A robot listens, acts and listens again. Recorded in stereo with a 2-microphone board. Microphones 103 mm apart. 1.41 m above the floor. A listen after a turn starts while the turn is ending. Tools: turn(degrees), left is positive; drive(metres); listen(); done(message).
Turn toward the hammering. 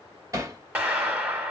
turn(degrees=-30)
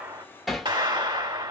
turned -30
done("Facing the hammering, 1 to 2 m away.")